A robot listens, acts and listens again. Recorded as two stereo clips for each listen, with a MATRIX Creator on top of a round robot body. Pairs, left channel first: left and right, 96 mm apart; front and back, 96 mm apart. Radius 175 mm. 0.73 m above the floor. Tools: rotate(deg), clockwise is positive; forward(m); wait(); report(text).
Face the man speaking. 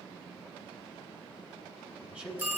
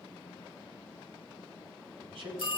rotate(165)
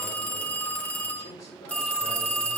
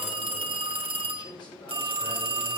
wait()
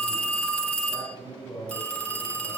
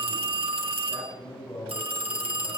rotate(-40)
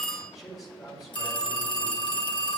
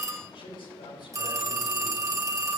report("Found it: a man speaking, straight ahead, over 4 m away.")